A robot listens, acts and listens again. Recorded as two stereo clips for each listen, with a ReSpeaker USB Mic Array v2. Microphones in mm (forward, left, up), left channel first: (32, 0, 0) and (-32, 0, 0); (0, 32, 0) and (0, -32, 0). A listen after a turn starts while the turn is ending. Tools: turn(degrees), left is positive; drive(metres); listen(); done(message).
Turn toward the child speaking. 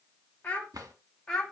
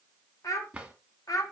turn(degrees=75)
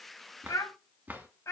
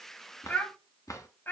turn(degrees=35)
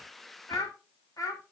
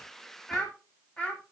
turn(degrees=20)
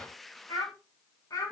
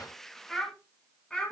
turn(degrees=15)
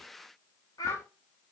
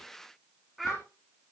done("Facing the child speaking, 2 to 4 m away.")